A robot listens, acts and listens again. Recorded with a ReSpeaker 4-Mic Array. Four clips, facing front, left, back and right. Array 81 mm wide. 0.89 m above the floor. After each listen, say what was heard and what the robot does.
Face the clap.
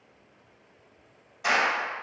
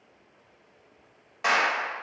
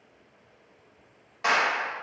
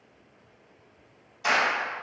The clap: 120° left. Turn 120° left.
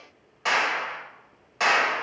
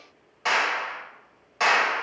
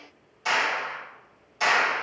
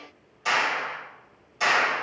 The clap is now 40° left. Turn 40° left.
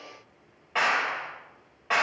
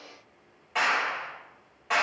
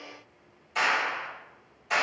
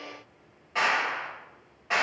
Found it: a clap, straight ahead, 1 to 2 m away.